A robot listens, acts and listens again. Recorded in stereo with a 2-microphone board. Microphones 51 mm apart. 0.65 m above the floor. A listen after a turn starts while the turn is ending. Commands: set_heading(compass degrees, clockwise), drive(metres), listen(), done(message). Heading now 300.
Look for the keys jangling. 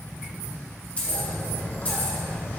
set_heading(270)
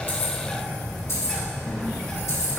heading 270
set_heading(170)
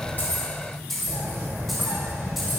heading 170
done("Facing the keys jangling, 2 to 4 m away.")